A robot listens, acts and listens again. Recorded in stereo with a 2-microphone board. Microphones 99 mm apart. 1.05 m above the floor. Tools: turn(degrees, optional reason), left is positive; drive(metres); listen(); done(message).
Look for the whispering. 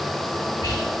turn(degrees=40, reason="The whispering: about 40° left or 140° left.")
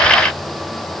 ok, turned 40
listen()
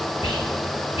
turn(degrees=100, reason="So it is at 100° left.")
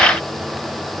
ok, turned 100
listen()
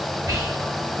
turn(degrees=-35, reason="The whispering is now 35° right.")
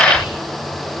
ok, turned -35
turn(degrees=-10, reason="The whispering is now 10° right.")
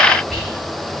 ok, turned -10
done("Found it: whispering, straight ahead, 2 to 4 m away.")